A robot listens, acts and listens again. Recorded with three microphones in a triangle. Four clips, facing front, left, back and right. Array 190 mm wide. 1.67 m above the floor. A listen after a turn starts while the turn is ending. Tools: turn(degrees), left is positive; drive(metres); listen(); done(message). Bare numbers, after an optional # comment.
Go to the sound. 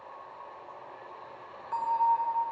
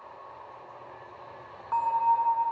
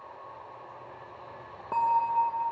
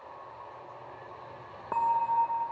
# The bell: 135° right.
turn(-135)
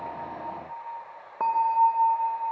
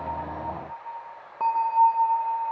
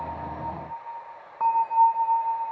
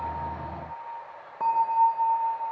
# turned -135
# The bell is now 10° left.
turn(10)
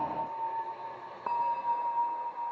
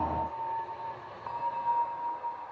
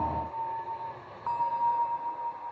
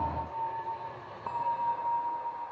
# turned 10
drive(1.0)
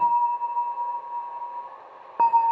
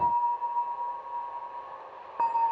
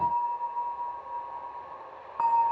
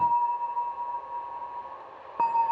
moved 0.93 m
drive(1.0)
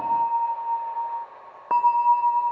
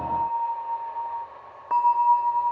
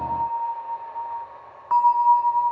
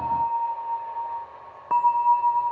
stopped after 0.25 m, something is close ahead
done("Arrived at the bell, straight ahead.")